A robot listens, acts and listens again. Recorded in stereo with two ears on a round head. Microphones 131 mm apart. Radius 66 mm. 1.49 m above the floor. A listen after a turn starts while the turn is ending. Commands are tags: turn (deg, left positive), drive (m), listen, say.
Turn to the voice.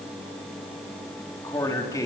<turn deg="25"/>
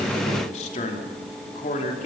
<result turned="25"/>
<turn deg="120"/>
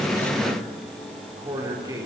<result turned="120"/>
<turn deg="-25"/>
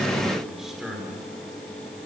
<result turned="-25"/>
<say>Found it: a man speaking, straight ahead.</say>